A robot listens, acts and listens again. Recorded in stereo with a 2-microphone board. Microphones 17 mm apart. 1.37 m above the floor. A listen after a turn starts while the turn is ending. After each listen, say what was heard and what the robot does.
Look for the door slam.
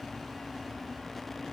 Keep listening.
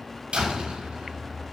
Turn 90° right.
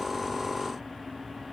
I heard a door slam from this way, but can't make it out now.